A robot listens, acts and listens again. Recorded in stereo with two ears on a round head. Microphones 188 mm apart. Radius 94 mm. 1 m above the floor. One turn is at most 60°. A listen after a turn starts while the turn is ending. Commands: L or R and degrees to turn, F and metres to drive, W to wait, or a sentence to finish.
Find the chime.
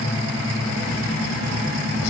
W
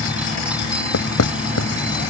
W
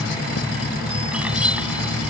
I can't make out a chime, only writing.